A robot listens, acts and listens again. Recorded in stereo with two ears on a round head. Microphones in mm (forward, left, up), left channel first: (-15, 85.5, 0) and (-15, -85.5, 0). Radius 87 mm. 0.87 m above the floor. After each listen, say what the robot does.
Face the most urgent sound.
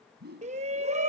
Turn 35° right.
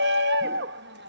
Turn 100° right.
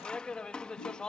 Found it: a shout, straight ahead.